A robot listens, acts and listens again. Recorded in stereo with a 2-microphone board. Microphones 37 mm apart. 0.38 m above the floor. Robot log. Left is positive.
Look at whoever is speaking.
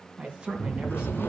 note: The man speaking: about 25° right or 155° right.
cmd yaw -25
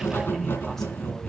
cmd idle
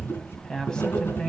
note: So it is at 15° left.
cmd yaw +15
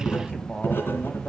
cmd idle
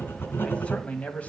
note: The man speaking is now 35° left.
cmd yaw +35
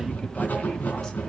cmd idle
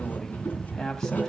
cmd idle
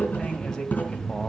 end: I heard a man speaking from this way, but can't make it out now.